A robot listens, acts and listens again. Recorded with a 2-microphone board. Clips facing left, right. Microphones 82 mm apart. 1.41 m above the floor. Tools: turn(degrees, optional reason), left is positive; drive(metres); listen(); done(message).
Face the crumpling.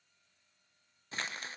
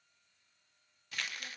turn(degrees=30, reason="The crumpling: about 30° left or 150° left.")
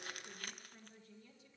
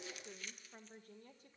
turn(degrees=120, reason="So it is at 120° left.")
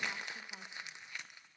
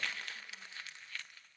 turn(degrees=20, reason="The crumpling is now 20° left.")
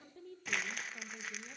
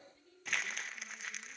done("Found it: crumpling, straight ahead.")